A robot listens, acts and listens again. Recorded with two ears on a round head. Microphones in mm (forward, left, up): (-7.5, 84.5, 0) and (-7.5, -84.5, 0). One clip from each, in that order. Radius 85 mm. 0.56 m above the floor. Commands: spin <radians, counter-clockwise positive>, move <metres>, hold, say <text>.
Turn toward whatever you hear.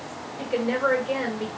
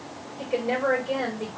spin 0.52
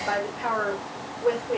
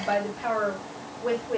spin 2.09
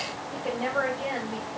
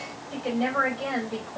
spin -0.70
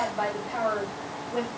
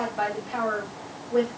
spin -0.17
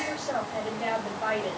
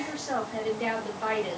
say Found it: a woman speaking, straight ahead, 2 to 4 m away.